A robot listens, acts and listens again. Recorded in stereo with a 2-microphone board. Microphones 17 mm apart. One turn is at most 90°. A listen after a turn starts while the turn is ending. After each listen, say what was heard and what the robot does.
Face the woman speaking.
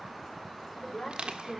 Turn 90° left.
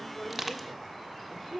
So it is at 10° right. Turn 10° right.
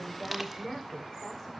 The woman speaking is now 10° right. Turn 10° right.
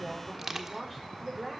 The woman speaking is now 15° right. Turn 15° right.
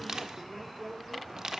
Found it: a woman speaking, straight ahead.